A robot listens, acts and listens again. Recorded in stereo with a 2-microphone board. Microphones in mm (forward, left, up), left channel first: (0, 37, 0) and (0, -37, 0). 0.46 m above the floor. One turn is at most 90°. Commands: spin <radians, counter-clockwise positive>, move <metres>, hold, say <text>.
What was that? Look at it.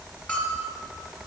spin 0.35
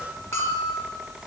spin 1.57
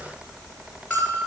spin 0.44
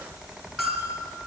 say Facing the bell.